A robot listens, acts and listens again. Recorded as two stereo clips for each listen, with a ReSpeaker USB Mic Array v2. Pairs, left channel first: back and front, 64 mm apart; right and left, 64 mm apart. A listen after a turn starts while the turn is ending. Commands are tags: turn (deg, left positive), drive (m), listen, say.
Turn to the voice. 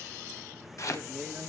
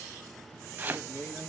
<turn deg="-70"/>
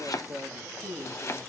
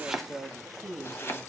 <say>Found it: a man speaking, straight ahead, 2 to 4 m away.</say>